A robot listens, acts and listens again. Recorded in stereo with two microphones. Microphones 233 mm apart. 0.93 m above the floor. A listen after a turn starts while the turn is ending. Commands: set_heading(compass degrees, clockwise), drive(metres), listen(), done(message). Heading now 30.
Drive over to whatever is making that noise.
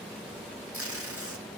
set_heading(105)
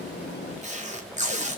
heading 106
set_heading(136)
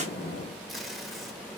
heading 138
drive(1.0)
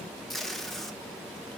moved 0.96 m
drive(1.0)
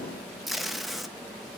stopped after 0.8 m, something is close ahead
done("Arrived at the tape being pulled, straight ahead.")